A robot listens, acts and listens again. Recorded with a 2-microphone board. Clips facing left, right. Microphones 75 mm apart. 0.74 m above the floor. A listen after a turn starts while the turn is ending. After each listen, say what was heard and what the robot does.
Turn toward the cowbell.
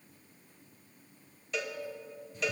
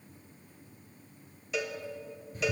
Turn 30° right.
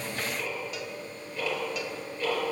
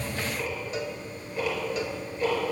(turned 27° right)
Keep listening.
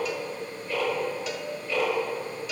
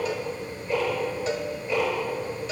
So it is at 150° right. Turn 150° right.
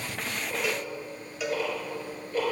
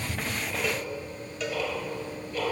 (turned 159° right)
Facing the cowbell.